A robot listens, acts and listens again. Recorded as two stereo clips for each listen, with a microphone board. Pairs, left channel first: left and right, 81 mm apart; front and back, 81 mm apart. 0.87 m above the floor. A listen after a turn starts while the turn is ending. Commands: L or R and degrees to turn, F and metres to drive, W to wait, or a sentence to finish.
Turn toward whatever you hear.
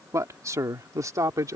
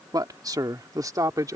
R135
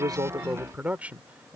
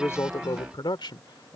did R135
R15
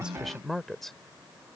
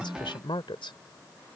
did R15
Found it: a man speaking, straight ahead.